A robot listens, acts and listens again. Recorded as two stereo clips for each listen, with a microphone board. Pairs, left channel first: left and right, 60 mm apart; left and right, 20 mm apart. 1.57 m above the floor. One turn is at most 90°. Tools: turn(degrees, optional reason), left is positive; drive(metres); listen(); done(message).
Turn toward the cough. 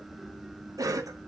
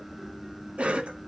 turn(degrees=-70, reason="The cough: about 70° right or 110° right.")
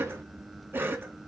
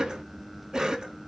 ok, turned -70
turn(degrees=-40, reason="So it is at 40° right.")
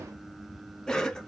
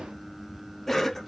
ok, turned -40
turn(degrees=10, reason="The cough is now 10° left.")
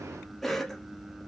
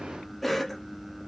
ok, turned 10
done("Facing the cough, 1 to 2 m away.")